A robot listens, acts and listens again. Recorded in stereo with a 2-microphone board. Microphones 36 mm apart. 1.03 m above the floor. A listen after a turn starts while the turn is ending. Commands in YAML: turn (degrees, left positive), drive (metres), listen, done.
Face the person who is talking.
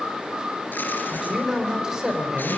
turn: -20
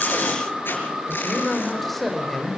done: "Facing the man speaking."